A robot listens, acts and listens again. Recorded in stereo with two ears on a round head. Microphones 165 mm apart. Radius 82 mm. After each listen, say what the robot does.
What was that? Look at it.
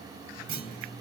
Turn 70° right.
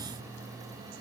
Keep listening.
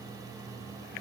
I heard a clunk, but can't make it out now. It was about straight ahead or 40° right.